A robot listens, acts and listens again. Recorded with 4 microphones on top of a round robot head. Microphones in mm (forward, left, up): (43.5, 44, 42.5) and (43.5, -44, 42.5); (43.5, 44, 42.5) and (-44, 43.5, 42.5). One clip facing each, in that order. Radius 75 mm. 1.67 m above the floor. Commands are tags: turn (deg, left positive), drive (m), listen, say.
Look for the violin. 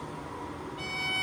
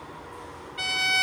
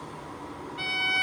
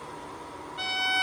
<turn deg="-110"/>
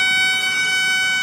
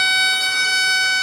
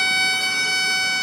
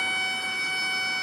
<turn deg="-20"/>
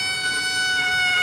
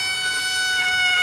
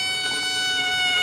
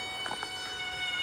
<say>Facing the violin.</say>